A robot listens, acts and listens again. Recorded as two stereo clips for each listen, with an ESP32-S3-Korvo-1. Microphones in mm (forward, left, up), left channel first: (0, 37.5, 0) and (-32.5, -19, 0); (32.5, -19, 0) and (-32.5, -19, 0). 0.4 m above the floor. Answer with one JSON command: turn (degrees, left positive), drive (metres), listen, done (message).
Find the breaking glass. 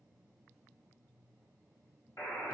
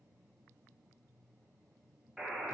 {"listen": true}
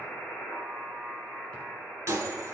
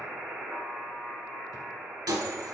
{"turn": -165}
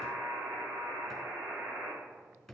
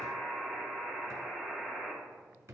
{"done": "I heard breaking glass from this way, but can't make it out now."}